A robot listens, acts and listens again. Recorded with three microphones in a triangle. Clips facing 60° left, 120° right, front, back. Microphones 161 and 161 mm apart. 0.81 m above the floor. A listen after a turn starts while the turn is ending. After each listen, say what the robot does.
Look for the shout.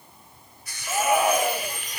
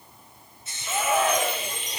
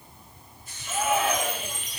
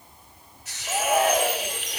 Turn 140° left.
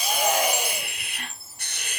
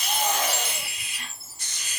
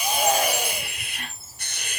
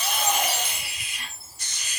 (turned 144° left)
Keep listening.
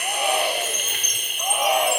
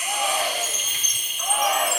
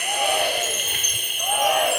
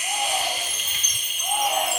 Found it: a shout, straight ahead, 2 to 4 m away.